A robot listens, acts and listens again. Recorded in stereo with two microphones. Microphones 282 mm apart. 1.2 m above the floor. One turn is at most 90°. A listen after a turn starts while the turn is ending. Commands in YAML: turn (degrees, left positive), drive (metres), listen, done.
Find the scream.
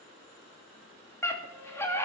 turn: 30
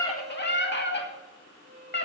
turn: 90
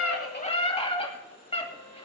turn: 20
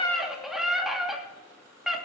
done: "Facing the scream, 2 to 4 m away."